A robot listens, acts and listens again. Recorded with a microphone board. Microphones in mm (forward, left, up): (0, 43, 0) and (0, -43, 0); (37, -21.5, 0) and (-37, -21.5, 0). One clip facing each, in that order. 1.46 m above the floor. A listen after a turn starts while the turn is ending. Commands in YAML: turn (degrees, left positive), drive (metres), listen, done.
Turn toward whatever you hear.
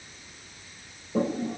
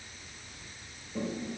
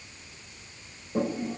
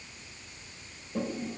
turn: 65
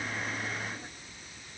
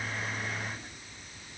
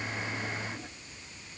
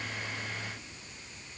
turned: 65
listen: true
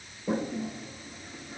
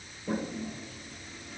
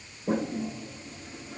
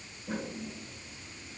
turn: 25
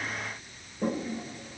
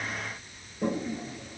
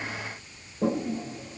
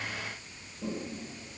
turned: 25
done: "Found it: a toilet flushing, straight ahead."